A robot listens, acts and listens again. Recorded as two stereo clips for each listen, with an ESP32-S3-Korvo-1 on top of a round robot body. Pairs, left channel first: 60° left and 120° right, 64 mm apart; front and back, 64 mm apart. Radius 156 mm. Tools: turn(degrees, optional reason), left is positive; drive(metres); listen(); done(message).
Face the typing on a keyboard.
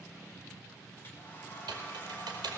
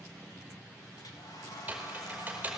turn(degrees=-110, reason="The typing on a keyboard: 110° right.")
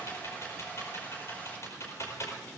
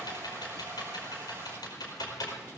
turn(degrees=15, reason="The typing on a keyboard is now 15° left.")
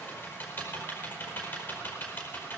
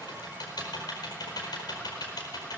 done("Found it: typing on a keyboard, straight ahead, over 4 m away.")